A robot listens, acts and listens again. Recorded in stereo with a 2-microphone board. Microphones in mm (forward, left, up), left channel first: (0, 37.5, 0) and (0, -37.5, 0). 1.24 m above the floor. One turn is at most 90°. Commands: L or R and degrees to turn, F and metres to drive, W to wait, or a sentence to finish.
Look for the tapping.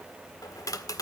L50
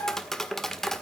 Facing the tapping.